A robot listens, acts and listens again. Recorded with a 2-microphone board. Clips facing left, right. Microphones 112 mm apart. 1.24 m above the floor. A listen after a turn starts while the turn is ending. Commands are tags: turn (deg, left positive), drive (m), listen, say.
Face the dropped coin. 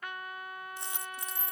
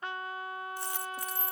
<turn deg="20"/>
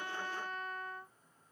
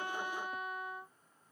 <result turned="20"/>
<listen/>
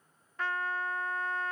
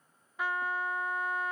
<say>I heard a dropped coin, but can't make it out now. It was about straight ahead or 140° left.</say>